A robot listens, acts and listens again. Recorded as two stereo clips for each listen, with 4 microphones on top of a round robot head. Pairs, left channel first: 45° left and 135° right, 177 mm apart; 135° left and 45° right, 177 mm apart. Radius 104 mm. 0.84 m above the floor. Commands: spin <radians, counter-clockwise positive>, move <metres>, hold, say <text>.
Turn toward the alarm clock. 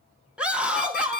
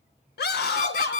spin 1.48
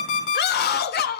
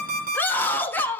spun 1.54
say Found it: an alarm clock, straight ahead.